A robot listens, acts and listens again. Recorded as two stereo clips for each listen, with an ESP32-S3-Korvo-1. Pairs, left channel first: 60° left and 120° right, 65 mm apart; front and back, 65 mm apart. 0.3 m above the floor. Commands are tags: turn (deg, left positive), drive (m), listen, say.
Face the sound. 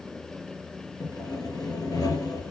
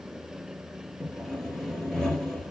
<turn deg="80"/>
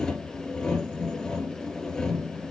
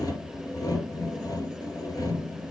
<turn deg="-20"/>
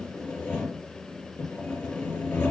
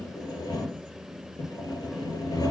<say>Found it: sawing, straight ahead, 2 to 4 m away.</say>